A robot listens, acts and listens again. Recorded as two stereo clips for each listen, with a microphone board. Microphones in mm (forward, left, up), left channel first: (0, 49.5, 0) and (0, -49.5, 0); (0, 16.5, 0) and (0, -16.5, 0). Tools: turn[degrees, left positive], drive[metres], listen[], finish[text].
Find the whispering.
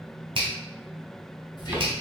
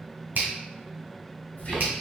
Thought: The whispering: about 55° left or 125° left.
Action: turn[55]
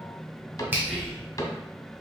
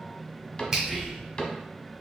Thought: So it is at 15° left.
Action: turn[15]
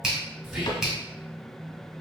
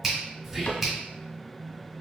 Action: finish[Facing the whispering.]